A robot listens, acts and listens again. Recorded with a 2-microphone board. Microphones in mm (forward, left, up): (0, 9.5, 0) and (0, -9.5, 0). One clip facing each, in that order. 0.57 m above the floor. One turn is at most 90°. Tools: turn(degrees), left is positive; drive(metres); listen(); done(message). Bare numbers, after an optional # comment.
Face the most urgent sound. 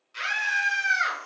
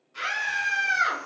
# The scream: about 50° left or 130° left.
turn(50)
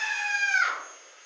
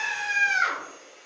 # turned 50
# So it is at 15° left.
turn(15)
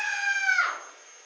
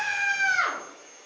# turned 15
done("Found it: a scream, straight ahead.")